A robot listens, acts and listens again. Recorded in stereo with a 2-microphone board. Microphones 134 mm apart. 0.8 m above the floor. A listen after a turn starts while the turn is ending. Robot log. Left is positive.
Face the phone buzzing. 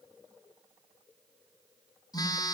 note: The phone buzzing: about 30° left or 150° left.
cmd yaw +30
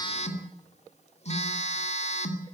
note: So it is at 120° left.
cmd yaw +120
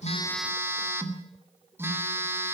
note: The phone buzzing is now 20° right.
cmd yaw -20
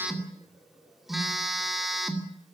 end: Found it: a phone buzzing, straight ahead.